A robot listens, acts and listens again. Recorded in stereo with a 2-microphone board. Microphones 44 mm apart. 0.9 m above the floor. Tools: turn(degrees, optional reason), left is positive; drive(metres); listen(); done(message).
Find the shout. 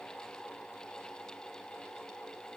listen()
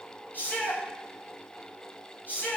turn(degrees=45, reason="The shout: about 45° left or 135° left.")
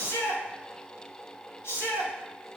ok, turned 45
turn(degrees=90, reason="So it is at 90° left.")
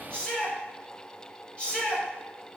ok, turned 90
turn(degrees=20, reason="The shout is now 20° left.")
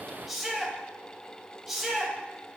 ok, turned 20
done("Facing the shout, over 4 m away.")